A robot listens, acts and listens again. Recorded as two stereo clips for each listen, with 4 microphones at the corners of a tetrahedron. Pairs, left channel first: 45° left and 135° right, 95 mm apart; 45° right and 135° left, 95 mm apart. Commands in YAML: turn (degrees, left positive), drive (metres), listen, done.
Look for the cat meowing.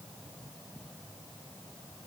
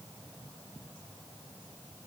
listen: true
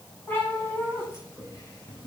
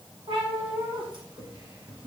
turn: 110
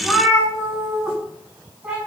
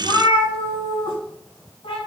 turn: -55
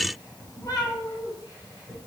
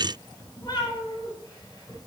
done: "Found it: a cat meowing, straight ahead."